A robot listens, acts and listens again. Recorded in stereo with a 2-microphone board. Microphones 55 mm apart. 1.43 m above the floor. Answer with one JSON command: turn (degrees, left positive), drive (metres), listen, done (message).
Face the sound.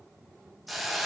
{"turn": 30}
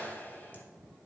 {"turn": 150}
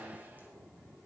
{"listen": true}
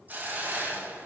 {"turn": -30}
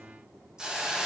{"turn": -10}
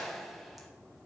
{"done": "Found it: a hiss, straight ahead, 2 to 4 m away."}